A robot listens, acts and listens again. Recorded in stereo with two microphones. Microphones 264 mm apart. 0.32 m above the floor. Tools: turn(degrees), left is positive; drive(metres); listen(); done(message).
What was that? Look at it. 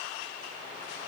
listen()
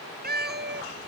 turn(degrees=-45)
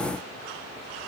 listen()
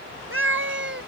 turn(degrees=-45)
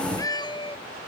turn(degrees=20)
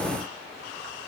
listen()
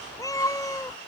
turn(degrees=15)
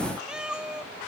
done("Facing the cat meowing.")